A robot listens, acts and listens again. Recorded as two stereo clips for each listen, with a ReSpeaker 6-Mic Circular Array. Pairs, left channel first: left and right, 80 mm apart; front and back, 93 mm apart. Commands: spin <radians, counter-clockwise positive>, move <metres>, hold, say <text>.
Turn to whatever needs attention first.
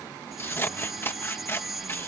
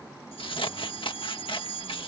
say Facing the fire alarm.